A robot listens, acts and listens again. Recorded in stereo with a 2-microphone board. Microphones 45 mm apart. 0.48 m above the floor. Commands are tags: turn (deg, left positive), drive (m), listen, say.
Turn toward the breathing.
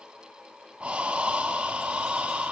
<turn deg="-25"/>
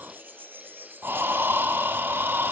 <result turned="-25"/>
<turn deg="-130"/>
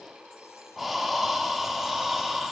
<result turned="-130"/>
<say>Found it: breathing, straight ahead, 1 to 2 m away.</say>